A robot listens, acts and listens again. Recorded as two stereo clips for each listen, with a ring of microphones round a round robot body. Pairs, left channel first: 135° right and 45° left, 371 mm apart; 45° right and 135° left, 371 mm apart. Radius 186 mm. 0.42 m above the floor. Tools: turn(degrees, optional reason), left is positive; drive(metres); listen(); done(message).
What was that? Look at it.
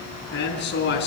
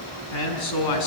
turn(degrees=-75, reason="The man speaking: 75° right.")
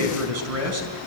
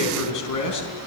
done("Facing the man speaking, over 4 m away.")